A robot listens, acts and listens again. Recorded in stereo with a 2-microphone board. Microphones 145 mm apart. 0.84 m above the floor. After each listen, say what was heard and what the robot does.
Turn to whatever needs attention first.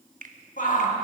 The shout: about 65° left or 115° left. Turn 65° left.
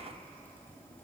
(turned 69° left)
Keep listening.
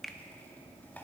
Keep listening.
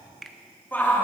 So it is at 15° left. Turn 15° left.
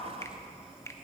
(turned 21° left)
Nothing new. It was at 10° right. Turn 10° right.
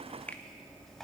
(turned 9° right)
Keep listening.
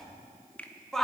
Found it: a shout, straight ahead, 1 to 2 m away.